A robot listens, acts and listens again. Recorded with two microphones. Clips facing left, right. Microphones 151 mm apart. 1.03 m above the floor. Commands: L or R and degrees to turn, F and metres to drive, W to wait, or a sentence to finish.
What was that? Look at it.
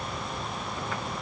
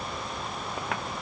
W
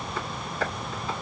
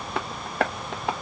R70
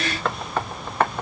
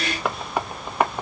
R15
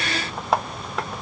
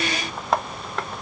Found it: tapping, straight ahead, under 1 m away.